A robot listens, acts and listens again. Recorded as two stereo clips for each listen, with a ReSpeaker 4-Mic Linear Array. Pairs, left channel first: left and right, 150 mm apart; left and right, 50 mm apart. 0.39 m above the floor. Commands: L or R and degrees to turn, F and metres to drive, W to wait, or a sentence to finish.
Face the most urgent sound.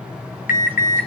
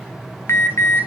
L60
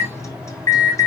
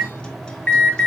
L25
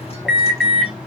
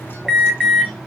Found it: an alarm, straight ahead.